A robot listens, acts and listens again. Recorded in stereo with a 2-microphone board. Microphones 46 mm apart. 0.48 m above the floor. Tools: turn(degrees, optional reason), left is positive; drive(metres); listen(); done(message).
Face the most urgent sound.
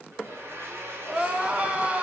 turn(degrees=-25, reason="The crying: about 25° right or 155° right.")
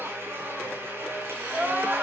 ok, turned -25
turn(degrees=-130, reason="So it is at 130° right.")
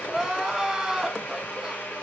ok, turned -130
turn(degrees=-10, reason="The crying is now 10° right.")
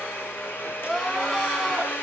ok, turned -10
done("Facing the crying, 2 to 4 m away.")